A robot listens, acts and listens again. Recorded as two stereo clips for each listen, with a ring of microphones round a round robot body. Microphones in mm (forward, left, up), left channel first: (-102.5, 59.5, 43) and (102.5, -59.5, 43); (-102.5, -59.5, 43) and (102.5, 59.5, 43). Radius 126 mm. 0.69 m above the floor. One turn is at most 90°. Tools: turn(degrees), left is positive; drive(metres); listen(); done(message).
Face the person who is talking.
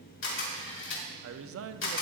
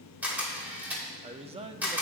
turn(degrees=-30)
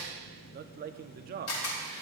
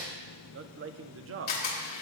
turn(degrees=15)
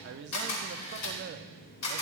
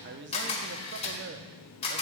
done("Found it: a man speaking, straight ahead.")